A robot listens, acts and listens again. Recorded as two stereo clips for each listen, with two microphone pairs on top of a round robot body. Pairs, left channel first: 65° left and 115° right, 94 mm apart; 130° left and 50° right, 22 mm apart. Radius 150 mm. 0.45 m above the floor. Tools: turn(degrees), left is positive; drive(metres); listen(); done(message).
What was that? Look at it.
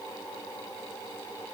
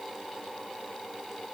listen()
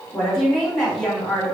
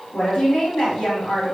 turn(degrees=155)
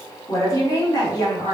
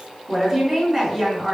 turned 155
turn(degrees=15)
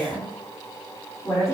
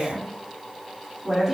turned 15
done("Facing the woman speaking.")